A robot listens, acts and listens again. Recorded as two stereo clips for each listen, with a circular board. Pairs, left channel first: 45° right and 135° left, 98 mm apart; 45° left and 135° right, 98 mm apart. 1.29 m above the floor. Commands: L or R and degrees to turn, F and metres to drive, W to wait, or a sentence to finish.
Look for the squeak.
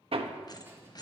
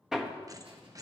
R85
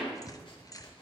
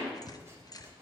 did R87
Facing the squeak.